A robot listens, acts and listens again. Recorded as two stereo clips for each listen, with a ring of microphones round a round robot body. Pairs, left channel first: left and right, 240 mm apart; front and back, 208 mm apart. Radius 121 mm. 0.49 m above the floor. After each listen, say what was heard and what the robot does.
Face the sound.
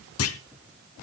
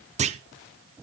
The clunk: 120° left. Turn 120° left.
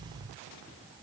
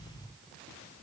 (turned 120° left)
Facing where the clunk came from. I can't hear it now.